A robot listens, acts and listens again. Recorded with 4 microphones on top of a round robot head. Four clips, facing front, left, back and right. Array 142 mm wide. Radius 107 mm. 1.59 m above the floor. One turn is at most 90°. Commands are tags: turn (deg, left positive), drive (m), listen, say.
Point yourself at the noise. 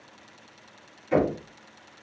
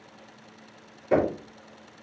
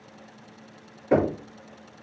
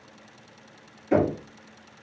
<turn deg="90"/>
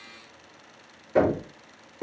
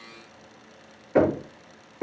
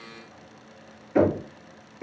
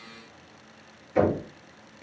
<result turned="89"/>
<turn deg="70"/>
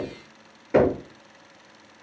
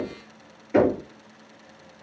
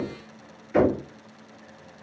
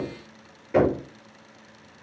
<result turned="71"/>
<say>Facing the knocking.</say>